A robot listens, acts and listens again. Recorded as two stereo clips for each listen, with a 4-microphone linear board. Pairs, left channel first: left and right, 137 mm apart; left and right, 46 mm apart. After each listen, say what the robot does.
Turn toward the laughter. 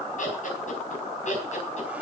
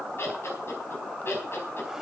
Turn 60° left.
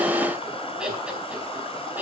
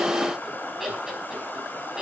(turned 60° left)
Turn 15° right.
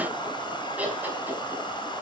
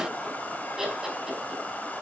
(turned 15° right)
Turn 10° right.
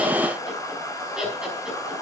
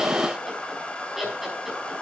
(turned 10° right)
Facing the laughter.